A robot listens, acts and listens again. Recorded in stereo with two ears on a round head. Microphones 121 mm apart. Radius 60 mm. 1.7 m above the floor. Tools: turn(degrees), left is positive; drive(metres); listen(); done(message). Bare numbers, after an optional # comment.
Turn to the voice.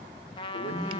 turn(90)
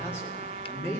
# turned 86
# So it is at 15° left.
turn(15)
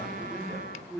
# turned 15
done("Facing the man speaking, over 4 m away.")